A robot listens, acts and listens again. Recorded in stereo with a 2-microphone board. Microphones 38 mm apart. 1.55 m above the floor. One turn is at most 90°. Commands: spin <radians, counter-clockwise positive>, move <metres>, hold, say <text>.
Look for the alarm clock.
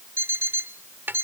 spin -1.22
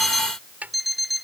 say Found it: an alarm clock, straight ahead.